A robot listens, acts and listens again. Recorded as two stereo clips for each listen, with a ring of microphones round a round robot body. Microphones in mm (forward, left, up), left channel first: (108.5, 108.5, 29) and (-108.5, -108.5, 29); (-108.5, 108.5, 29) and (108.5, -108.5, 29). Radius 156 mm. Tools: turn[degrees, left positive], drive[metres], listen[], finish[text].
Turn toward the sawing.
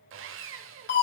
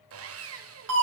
Thought: The sawing: 90° right.
Action: turn[-90]
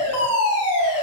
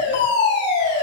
Action: listen[]
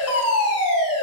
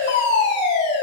Action: listen[]
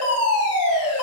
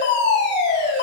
Action: finish[Facing where the sawing came from. I can't hear it now.]